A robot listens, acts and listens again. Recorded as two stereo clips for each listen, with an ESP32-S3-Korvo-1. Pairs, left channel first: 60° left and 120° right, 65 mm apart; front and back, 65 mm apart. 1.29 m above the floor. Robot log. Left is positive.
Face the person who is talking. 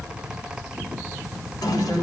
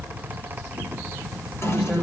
note: The man speaking: 85° left.
cmd yaw +85
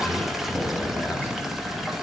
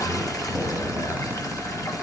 cmd idle
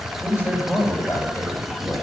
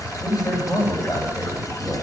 end: Facing the man speaking, over 4 m away.